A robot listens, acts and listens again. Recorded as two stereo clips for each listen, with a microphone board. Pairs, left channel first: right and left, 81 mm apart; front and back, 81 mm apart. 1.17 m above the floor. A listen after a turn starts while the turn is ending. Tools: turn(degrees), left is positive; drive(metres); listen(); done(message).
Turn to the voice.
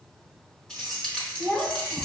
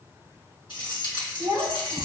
turn(degrees=-155)
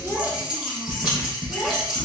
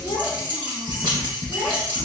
listen()
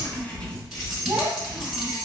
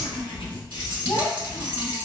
turn(degrees=25)
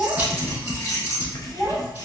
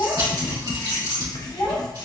done("Found it: a child speaking, straight ahead.")